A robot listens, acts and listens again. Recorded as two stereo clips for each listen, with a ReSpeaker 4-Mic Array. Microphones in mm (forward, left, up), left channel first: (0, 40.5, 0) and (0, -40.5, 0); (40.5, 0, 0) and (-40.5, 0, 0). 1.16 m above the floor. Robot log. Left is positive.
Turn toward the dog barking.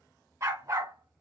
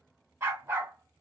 note: The dog barking: 120° right.
cmd yaw -120
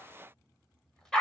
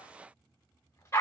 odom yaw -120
note: The dog barking is now 20° left.
cmd yaw +20
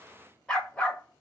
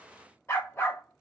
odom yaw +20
note: The dog barking is now 30° left.
cmd yaw +30
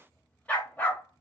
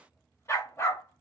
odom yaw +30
note: The dog barking is now 40° left.
cmd yaw +40
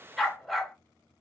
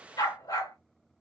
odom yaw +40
end: Facing the dog barking, 1 to 2 m away.